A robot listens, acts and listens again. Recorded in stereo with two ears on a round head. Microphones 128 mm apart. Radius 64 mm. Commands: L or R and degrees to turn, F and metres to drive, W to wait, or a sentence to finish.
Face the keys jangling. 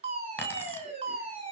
L15
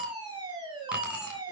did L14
R30
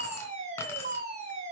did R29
L15
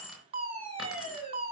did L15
Found it: keys jangling, straight ahead.